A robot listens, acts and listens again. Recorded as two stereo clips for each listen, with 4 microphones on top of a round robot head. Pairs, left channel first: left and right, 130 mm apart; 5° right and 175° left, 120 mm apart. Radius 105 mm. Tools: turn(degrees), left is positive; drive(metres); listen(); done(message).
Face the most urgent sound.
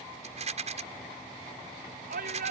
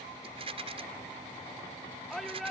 turn(degrees=-95)
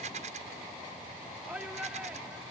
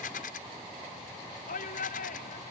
done("Found it: a shout, straight ahead.")